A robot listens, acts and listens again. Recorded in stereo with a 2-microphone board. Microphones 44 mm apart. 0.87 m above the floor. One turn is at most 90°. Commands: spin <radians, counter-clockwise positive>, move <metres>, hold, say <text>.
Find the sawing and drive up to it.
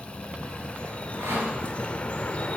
spin -1.57
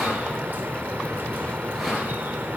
move 1.0
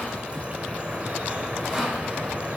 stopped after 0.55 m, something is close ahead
say Blocked. The sawing is further on, straight ahead.